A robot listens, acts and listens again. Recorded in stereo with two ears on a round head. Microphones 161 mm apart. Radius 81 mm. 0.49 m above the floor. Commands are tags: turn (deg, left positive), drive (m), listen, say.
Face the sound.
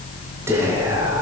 <turn deg="-30"/>
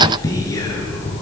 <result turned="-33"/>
<turn deg="20"/>
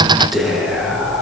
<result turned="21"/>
<say>Facing the whispering.</say>